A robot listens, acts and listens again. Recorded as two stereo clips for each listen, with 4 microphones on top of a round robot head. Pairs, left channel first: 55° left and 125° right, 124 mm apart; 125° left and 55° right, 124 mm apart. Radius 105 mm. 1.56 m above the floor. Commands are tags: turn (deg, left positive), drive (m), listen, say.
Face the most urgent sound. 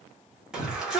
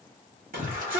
<turn deg="-35"/>
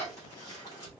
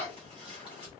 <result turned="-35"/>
<turn deg="-10"/>
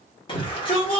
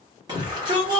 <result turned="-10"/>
<say>Found it: a shout, straight ahead, 1 to 2 m away.</say>